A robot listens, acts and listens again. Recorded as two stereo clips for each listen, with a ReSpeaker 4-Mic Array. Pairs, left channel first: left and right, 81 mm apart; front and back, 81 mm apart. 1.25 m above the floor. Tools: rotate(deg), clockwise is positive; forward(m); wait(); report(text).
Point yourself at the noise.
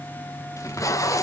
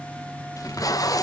rotate(-40)
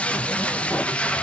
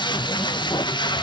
rotate(-15)
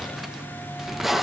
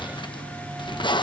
report("Facing the tape being pulled.")